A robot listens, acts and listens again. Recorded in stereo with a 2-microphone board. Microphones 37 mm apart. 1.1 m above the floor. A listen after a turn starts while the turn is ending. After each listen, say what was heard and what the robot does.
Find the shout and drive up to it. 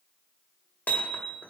Keep listening.
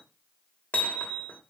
Keep listening.
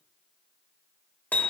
I can't make out a shout, only hammering.